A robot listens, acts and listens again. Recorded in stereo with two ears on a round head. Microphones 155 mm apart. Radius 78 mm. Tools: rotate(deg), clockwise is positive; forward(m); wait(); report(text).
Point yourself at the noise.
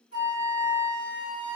rotate(-65)
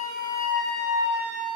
report("Found it: a flute, straight ahead.")